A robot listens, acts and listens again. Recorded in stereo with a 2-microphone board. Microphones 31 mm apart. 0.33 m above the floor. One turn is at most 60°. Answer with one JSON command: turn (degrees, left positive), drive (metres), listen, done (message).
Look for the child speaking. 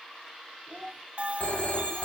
{"turn": -45}
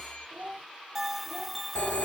{"turn": -60}
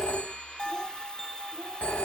{"turn": -25}
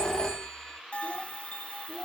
{"listen": true}
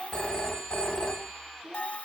{"turn": -20}
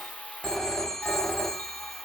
{"listen": true}
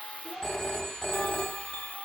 {"listen": true}
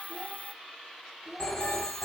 {"done": "Found it: a child speaking, straight ahead."}